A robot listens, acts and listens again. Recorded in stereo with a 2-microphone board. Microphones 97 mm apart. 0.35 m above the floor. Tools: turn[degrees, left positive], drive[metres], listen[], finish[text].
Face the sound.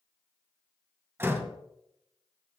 Thought: The door slam: about 25° right or 155° right.
Action: turn[-25]
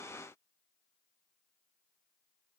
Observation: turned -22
Action: listen[]
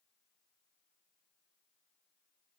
Action: finish[I heard a door slam, but can't make it out now. It was about 5° right or 135° right.]